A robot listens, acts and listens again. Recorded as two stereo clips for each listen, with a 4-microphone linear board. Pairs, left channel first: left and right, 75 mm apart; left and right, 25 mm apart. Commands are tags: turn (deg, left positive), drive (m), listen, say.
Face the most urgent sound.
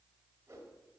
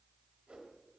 <listen/>
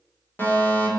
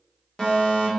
<turn deg="30"/>
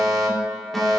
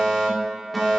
<say>Facing the fire alarm, 2 to 4 m away.</say>